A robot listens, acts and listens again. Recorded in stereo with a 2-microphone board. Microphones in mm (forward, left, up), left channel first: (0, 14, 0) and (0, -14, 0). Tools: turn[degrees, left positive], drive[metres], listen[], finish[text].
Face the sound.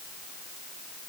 Action: listen[]
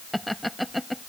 Action: turn[30]
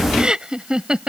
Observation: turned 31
Thought: So it is at 30° right.
Action: turn[-30]
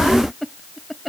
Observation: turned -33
Action: finish[Found it: laughter, straight ahead.]